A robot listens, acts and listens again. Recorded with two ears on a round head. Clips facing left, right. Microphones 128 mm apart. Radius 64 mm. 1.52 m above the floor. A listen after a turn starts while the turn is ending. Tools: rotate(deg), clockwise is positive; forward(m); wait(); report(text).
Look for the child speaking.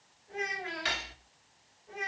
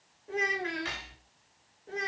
rotate(70)
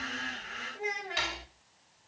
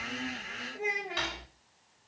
rotate(20)
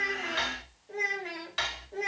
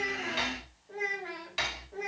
rotate(-25)
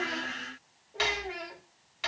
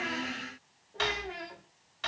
rotate(-15)
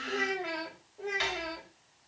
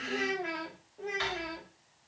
report("Found it: a child speaking, straight ahead, 1 to 2 m away.")